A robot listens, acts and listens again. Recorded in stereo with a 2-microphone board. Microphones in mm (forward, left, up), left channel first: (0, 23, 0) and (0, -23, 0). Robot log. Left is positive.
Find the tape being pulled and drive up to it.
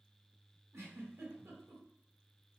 cmd idle
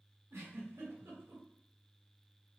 cmd idle
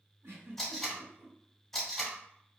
cmd yaw +30
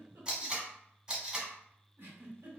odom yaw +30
note: So it is at 20° right.
cmd yaw -20
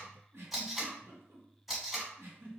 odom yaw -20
cmd fwd 1.0
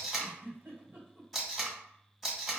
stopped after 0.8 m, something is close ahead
end: I am next to the tape being pulled.